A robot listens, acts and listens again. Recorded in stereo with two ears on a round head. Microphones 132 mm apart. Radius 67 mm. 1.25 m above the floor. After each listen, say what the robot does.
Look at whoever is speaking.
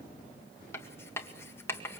Keep listening.
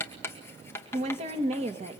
Turn 40° right.
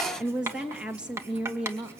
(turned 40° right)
Found it: a woman speaking, straight ahead.